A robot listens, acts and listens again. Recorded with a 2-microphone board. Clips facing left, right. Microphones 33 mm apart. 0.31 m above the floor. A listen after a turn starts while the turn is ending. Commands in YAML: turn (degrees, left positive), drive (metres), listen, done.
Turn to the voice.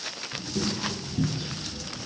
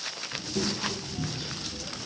turn: -15
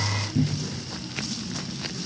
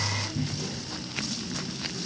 turn: -150
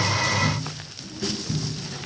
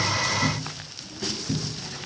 done: "Found it: a child speaking, straight ahead, over 4 m away."